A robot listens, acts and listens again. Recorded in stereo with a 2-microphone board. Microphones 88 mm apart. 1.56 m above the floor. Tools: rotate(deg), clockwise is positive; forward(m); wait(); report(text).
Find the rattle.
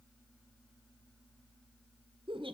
wait()
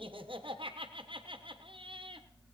wait()
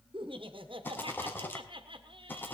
rotate(-25)
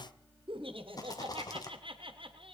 rotate(-125)
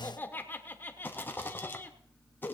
rotate(-25)
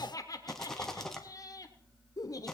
report("Facing the rattle.")